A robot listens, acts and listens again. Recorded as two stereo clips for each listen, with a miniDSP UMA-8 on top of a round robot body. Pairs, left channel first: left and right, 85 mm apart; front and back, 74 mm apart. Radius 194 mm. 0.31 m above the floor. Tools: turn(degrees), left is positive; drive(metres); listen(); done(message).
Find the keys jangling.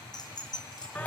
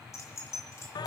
turn(degrees=50)
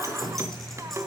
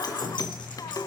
listen()
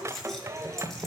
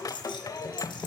done("Facing the keys jangling, over 4 m away.")